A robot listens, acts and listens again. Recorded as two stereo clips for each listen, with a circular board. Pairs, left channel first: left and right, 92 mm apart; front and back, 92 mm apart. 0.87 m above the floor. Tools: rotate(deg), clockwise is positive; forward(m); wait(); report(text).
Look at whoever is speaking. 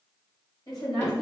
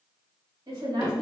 rotate(-135)
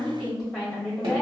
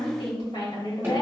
report("Found it: a woman speaking, straight ahead.")